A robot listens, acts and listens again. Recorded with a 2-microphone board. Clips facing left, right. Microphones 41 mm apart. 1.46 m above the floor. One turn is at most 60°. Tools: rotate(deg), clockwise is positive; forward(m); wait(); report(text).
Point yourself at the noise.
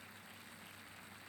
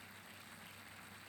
wait()
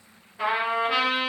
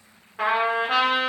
rotate(60)
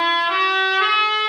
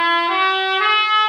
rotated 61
rotate(20)
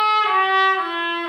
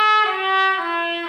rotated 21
report("Found it: a trumpet, straight ahead, 1 to 2 m away.")